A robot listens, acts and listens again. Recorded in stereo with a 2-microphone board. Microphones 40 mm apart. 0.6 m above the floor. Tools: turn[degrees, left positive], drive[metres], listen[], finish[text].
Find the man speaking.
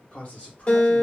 Thought: The man speaking: about 40° left or 140° left.
Action: turn[40]
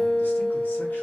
Action: listen[]
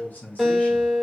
Thought: The man speaking: about 45° left or 135° left.
Action: turn[45]
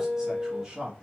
Thought: So it is at 30° right.
Action: turn[-30]
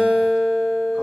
Action: listen[]
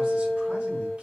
Action: listen[]
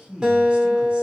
Thought: The man speaking is now 30° right.
Action: turn[-30]
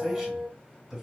Action: finish[Facing the man speaking, 1 to 2 m away.]